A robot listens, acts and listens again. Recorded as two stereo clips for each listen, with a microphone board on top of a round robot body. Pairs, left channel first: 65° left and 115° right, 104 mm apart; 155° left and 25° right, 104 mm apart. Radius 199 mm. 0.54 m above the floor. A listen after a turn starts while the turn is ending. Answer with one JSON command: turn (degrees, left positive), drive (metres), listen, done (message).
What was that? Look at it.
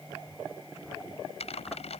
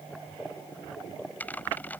{"turn": 85}
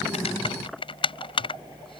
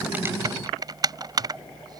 {"turn": 30}
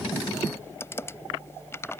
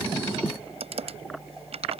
{"done": "Facing the typing on a keyboard."}